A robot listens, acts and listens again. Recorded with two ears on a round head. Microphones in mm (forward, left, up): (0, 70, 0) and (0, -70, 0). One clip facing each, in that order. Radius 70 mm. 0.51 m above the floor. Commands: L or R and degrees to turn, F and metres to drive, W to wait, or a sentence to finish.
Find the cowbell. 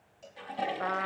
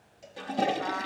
R30
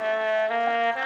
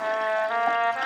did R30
W
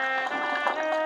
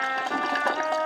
W
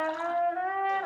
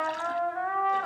I heard a cowbell, but can't make it out now. It was about 20° left or 140° right.